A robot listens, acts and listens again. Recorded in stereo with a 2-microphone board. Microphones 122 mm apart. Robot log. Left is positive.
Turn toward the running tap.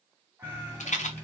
note: The running tap: about 15° left or 165° left.
cmd yaw +15
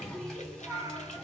end: Found it: a running tap, straight ahead.